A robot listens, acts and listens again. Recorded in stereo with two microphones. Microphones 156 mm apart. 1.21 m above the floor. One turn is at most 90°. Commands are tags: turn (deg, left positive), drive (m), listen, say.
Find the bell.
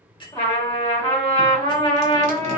<turn deg="30"/>
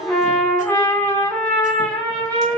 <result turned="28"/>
<listen/>
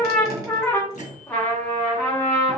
<listen/>
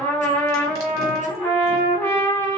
<say>I heard a bell, but can't make it out now. It was about 5° left or 120° left.</say>